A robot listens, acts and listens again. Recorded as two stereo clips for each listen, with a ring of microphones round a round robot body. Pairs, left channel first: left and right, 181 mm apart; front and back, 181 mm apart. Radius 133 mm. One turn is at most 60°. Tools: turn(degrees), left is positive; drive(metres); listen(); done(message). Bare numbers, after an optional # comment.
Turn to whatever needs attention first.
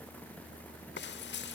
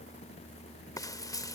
listen()
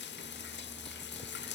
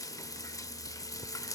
listen()
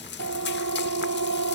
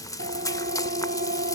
# The siren: 120° right.
turn(-60)
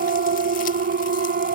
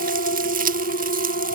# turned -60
# The siren is now 55° right.
turn(-55)
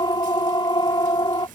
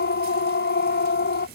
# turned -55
# The siren is now 25° left.
turn(25)
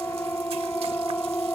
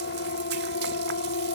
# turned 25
# The siren is now 15° left.
turn(15)
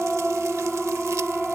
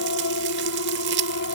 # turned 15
done("Facing the siren.")